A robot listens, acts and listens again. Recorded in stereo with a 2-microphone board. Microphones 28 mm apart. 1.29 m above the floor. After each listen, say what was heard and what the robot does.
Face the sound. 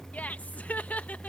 The laughter: about 65° left or 115° left. Turn 65° left.
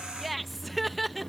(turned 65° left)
Facing the laughter.